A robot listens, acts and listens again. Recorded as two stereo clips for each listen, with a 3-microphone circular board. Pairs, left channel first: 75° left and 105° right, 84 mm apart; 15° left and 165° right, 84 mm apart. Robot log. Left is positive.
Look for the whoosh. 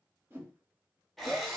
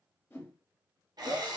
note: The whoosh: 45° right.
cmd yaw -45
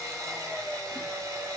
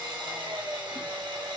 cmd idle
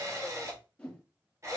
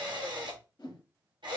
end: Facing the whoosh, under 1 m away.